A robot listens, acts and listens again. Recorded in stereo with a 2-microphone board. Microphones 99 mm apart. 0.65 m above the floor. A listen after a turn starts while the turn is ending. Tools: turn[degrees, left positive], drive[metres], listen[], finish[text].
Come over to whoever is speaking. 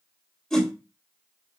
Action: listen[]
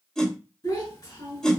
Thought: The child speaking: about 45° left or 135° left.
Action: turn[45]
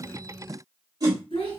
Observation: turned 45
Thought: So it is at 90° left.
Action: turn[90]
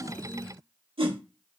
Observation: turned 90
Action: listen[]
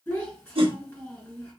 Thought: The child speaking is now 15° left.
Action: turn[15]
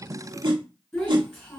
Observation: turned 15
Action: drive[1.0]
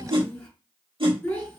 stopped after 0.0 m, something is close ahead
Thought: The child speaking is now 10° left.
Action: turn[10]
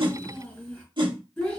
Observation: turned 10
Action: finish[Something is in my way. I am facing the child speaking but have not reached it.]